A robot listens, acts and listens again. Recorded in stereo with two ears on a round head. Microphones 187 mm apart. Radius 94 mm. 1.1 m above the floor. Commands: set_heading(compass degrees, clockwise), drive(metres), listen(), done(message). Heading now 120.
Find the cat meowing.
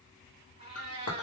set_heading(150)
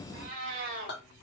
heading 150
set_heading(190)
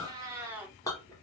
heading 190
set_heading(200)
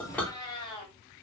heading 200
set_heading(175)
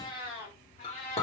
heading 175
set_heading(145)
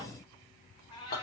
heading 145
set_heading(125)
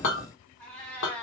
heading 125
done("Found it: a cat meowing, straight ahead, 1 to 2 m away.")